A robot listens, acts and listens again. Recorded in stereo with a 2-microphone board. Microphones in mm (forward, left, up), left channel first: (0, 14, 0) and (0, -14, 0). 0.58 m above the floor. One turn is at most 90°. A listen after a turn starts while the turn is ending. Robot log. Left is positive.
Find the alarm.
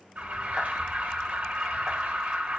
note: The alarm: about 65° right or 115° right.
cmd yaw -65
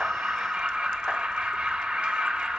note: So it is at 45° right.
cmd yaw -45
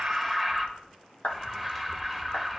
end: Found it: an alarm, straight ahead, 1 to 2 m away.